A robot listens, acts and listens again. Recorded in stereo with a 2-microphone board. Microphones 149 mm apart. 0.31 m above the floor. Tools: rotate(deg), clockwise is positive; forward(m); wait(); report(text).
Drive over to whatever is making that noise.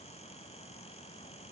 wait()
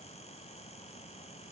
wait()
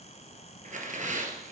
rotate(60)
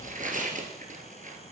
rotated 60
rotate(60)
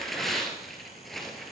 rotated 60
forward(1.0)
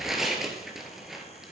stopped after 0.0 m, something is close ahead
report("Blocked. The tearing paper is further on, straight ahead.")